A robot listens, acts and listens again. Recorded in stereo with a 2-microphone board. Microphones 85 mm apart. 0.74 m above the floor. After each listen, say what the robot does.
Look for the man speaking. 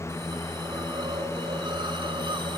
Keep listening.
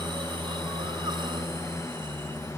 Keep listening.
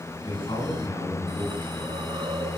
Turn 70° left.
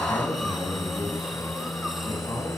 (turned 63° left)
Keep listening.
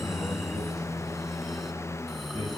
Turn 45° left.
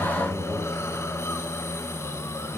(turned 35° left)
Turn 10° left.
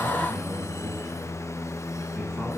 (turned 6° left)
Keep listening.
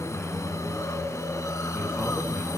Facing where the man speaking came from. I can't hear it now.